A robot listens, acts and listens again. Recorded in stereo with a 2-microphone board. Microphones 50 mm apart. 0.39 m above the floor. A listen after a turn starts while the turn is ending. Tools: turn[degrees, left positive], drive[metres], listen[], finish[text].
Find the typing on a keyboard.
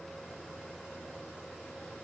Action: listen[]
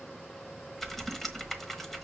Action: turn[30]
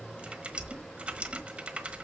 Thought: So it is at 25° right.
Action: turn[-25]
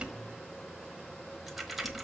Action: finish[Facing the typing on a keyboard, 1 to 2 m away.]